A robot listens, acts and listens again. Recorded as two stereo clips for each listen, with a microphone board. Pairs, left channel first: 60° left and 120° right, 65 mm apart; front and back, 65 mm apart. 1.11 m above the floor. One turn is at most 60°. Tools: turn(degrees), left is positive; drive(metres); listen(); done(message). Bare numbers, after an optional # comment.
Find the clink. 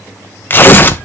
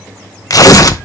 listen()
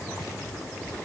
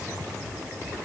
listen()
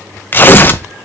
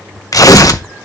done("I can't make out a clink to turn to.")